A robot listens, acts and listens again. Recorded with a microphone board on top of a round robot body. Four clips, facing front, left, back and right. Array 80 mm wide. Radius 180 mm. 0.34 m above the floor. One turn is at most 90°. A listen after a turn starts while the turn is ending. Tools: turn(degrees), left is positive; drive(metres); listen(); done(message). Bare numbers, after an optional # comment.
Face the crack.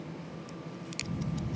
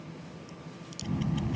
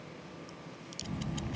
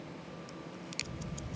# The crack: 40° right.
turn(-40)
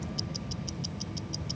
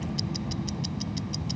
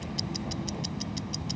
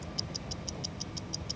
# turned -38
done("I heard a crack from this way, but can't make it out now.")